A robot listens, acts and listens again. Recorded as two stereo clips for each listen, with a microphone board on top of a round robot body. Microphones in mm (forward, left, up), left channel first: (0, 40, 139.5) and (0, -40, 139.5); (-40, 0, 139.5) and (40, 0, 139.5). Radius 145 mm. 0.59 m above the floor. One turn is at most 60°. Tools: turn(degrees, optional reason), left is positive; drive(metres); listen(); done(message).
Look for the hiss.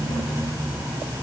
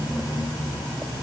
listen()
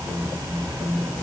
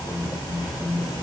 listen()
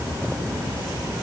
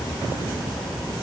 done("I can't make out a hiss to turn to.")